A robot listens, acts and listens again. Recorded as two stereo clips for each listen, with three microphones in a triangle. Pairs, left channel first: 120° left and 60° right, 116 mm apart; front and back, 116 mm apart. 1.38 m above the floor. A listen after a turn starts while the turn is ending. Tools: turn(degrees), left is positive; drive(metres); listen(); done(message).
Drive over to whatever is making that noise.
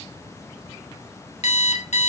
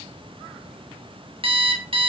turn(degrees=140)
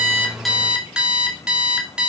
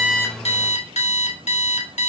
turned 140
turn(degrees=25)
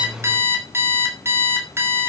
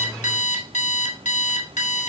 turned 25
turn(degrees=10)
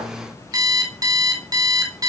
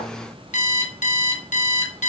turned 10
drive(metres=1.0)
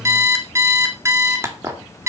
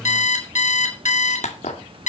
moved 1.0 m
drive(metres=1.0)
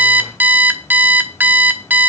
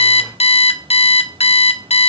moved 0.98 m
turn(degrees=15)
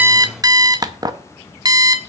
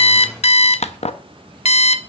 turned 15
drive(metres=1.0)
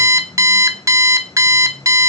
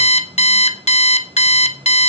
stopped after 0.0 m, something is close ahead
done("I am next to the alarm clock.")